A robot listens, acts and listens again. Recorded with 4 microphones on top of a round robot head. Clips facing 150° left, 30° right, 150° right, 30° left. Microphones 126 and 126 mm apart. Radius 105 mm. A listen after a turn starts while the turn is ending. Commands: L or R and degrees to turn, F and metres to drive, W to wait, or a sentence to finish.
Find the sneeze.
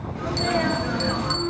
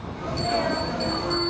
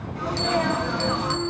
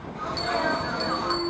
L125
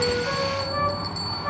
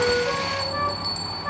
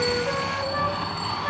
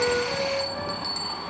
I heard a sneeze from this way, but can't make it out now.